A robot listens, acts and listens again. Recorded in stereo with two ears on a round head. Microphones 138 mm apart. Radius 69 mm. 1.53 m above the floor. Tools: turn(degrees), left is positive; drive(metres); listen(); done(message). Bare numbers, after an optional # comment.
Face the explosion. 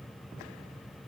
listen()
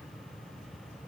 listen()
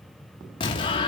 # The explosion: about 30° left or 150° left.
turn(30)
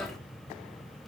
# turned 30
done("Found it: an explosion, straight ahead, 2 to 4 m away.")